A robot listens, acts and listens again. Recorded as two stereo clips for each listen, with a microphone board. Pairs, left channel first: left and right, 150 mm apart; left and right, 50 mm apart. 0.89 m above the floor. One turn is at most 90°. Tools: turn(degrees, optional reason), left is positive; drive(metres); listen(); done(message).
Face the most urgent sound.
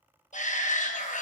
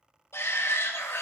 turn(degrees=55, reason="The shout: about 55° left or 125° left.")
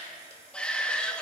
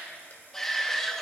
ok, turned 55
turn(degrees=10, reason="So it is at 10° left.")
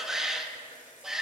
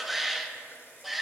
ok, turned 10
done("Facing the shout.")